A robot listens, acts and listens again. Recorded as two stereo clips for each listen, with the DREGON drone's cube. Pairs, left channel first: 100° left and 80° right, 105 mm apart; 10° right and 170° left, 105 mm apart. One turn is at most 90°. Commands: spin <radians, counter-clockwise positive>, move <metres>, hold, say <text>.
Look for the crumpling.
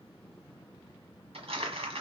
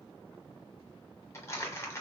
spin -1.31
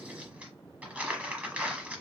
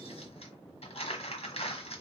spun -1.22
say Found it: crumpling, straight ahead, 1 to 2 m away.